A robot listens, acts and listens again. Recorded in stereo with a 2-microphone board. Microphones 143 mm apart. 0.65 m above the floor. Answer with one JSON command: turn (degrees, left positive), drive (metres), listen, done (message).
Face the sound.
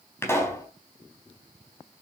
{"turn": 20}
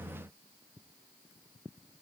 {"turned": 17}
{"listen": true}
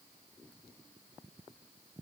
{"done": "I heard a pop, but can't make it out now. It was about straight ahead or 145° left."}